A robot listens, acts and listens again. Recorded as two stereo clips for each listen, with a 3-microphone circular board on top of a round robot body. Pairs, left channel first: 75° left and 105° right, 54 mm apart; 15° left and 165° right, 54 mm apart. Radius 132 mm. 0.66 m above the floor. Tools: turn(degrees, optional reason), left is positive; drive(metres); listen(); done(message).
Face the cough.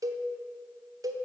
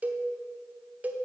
listen()
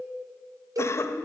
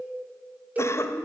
turn(degrees=45, reason="The cough: 45° left.")
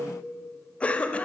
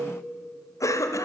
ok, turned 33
turn(degrees=10, reason="The cough is now 10° left.")
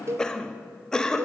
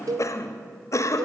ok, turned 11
done("Facing the cough.")